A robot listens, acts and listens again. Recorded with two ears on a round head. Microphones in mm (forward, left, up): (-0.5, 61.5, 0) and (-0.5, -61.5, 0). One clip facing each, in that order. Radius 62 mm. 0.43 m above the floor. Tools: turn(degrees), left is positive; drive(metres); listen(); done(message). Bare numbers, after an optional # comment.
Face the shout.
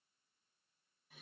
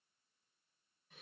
listen()
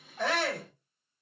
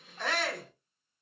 # The shout: about 35° left or 145° left.
turn(35)
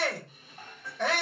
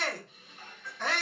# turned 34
# So it is at 105° left.
turn(105)
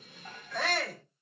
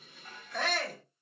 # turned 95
# The shout is now 10° left.
turn(10)
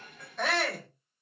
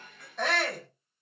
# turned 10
done("Found it: a shout, straight ahead, 1 to 2 m away.")